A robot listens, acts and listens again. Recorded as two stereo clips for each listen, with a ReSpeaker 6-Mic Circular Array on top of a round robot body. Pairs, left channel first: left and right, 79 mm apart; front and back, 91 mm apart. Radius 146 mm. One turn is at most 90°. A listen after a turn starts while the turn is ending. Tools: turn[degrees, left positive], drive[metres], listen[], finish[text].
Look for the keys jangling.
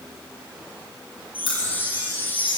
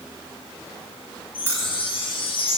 Thought: The keys jangling: 115° left.
Action: turn[90]
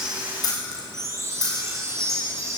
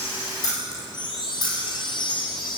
Thought: The keys jangling is now 45° left.
Action: turn[45]
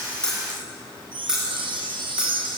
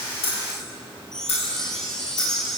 Thought: The keys jangling is now 10° right.
Action: turn[-10]
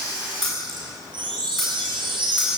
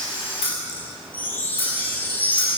Action: finish[Facing the keys jangling.]